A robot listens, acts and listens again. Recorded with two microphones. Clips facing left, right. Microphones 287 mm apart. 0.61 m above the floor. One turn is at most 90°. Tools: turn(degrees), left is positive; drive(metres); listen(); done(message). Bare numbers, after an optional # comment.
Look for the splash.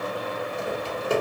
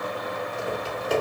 listen()
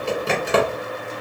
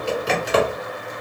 listen()
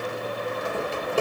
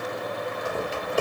done("I can't make out a splash, only typing on a keyboard.")